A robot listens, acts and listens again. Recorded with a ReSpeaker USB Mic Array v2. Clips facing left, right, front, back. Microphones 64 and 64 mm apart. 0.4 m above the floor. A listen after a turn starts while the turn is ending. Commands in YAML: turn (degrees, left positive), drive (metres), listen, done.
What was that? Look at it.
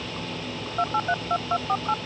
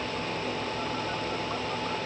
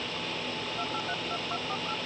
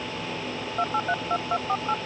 turn: 130
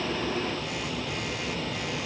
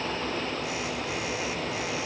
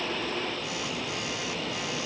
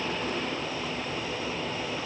listen: true
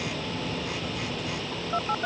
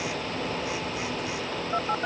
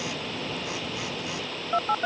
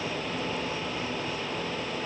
done: "Facing the phone buzzing."